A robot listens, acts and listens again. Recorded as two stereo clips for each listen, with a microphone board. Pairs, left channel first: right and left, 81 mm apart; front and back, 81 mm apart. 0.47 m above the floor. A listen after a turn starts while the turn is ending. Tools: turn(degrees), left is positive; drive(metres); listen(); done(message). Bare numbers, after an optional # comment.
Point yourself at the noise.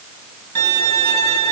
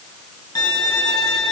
# The violin: 40° right.
turn(-40)
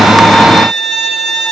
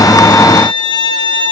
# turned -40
done("Facing the violin.")